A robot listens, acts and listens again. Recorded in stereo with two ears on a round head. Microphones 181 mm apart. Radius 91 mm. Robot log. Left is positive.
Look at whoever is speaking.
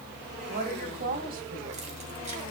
note: The woman speaking: about 45° right or 135° right.
cmd yaw -45
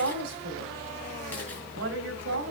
note: So it is at 80° right.
cmd yaw -80
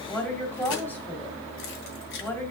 note: The woman speaking is now 10° left.
cmd yaw +10
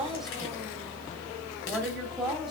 end: Facing the woman speaking.